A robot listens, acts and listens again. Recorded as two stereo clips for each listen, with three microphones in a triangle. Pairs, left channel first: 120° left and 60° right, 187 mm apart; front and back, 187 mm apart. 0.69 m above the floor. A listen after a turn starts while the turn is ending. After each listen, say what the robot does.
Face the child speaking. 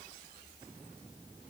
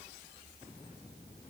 Keep listening.
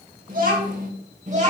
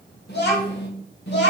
Turn 10° right.
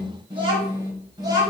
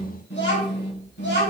Turn 10° left.
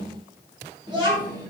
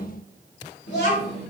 Found it: a child speaking, straight ahead, 2 to 4 m away.